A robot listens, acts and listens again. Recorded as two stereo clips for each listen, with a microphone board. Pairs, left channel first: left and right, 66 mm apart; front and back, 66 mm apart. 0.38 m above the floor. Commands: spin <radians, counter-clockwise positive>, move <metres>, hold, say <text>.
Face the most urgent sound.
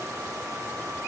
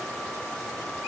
hold
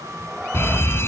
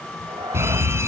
spin 2.36
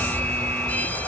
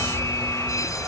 spin 0.44
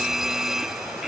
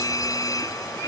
say Found it: a fire alarm, straight ahead.